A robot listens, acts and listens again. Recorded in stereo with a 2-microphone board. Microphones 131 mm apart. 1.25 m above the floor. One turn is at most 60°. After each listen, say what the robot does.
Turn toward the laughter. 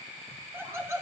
Turn 20° right.
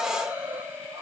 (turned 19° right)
Turn 15° right.
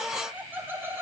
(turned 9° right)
Turn 20° right.
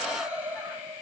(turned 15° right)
Turn 30° right.
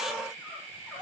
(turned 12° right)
Keep listening.
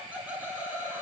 Turn 30° right.
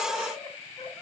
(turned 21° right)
Keep listening.
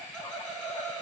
Facing the laughter.